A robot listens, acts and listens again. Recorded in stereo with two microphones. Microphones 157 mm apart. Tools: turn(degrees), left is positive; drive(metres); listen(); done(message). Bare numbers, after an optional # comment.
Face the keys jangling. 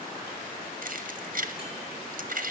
# The keys jangling: about 60° right or 120° right.
turn(-60)
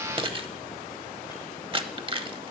# So it is at 40° right.
turn(-40)
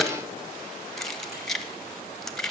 done("Found it: keys jangling, straight ahead, under 1 m away.")